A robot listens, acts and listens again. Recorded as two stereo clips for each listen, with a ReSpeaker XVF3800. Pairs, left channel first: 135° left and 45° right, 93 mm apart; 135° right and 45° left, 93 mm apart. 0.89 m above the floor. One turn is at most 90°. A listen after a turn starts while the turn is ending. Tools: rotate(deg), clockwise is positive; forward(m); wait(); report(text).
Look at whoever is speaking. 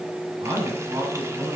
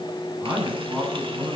rotate(25)
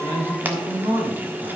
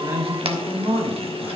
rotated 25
rotate(20)
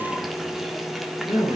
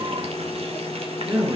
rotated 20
report("Facing the man speaking.")